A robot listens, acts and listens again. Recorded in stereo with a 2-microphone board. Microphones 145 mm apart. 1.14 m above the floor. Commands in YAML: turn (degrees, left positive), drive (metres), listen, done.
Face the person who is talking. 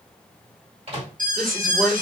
turn: 30
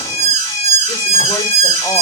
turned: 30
listen: true
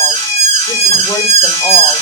listen: true
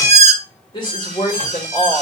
turn: 150
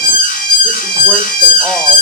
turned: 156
turn: -10
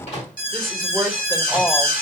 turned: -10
done: "Facing the woman speaking."